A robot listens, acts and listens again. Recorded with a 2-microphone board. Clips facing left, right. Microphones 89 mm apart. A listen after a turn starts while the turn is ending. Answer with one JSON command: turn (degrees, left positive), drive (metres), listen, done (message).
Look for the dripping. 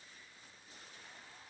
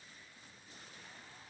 {"listen": true}
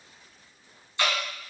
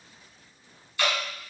{"turn": 25}
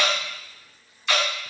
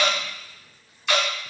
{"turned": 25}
{"done": "Found it: dripping, straight ahead, 1 to 2 m away."}